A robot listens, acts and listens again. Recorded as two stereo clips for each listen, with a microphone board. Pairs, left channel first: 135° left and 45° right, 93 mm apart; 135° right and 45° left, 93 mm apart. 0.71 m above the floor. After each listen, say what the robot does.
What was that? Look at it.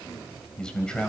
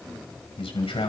Turn 145° right.
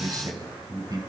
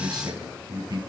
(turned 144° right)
Facing the man speaking.